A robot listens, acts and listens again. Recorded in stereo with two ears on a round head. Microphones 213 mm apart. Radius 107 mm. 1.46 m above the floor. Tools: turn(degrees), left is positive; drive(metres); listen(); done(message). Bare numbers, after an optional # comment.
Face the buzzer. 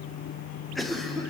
listen()
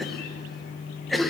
listen()
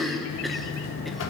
# The buzzer: about 60° left or 120° left.
turn(60)
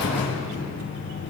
# So it is at 55° left.
turn(55)
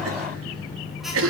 done("Facing the buzzer.")